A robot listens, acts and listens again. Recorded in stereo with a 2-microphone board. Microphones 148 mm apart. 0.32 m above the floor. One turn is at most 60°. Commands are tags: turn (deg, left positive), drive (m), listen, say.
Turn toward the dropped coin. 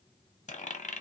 <turn deg="55"/>
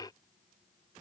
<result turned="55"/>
<listen/>
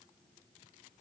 <say>I heard a dropped coin, but can't make it out now. It was about straight ahead or 70° left.</say>